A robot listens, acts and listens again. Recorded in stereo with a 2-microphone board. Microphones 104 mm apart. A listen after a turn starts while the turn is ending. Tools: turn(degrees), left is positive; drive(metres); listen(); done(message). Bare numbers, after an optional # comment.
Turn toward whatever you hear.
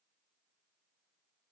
listen()
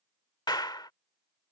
# The clap: about 45° left or 135° left.
turn(45)
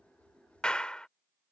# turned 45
# So it is at 10° left.
turn(10)
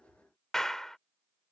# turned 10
done("Found it: a clap, straight ahead.")